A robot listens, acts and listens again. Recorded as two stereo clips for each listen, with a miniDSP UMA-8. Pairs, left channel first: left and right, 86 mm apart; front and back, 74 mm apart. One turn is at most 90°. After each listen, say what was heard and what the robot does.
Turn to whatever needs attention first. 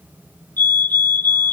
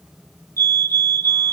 The fire alarm: 155° left. Turn 90° left.
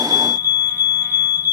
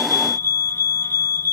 The fire alarm is now 50° left. Turn 50° left.
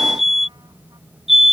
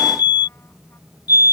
Found it: a fire alarm, straight ahead.